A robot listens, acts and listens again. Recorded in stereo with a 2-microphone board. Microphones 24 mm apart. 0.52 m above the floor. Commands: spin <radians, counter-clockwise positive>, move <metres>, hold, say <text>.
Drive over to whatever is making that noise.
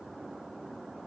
hold
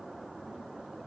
hold
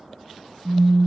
spin 1.05
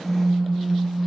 spin 1.05
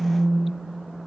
spin -0.26
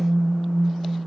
move 1.0
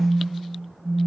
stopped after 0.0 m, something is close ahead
say Blocked. The phone buzzing is further on, straight ahead.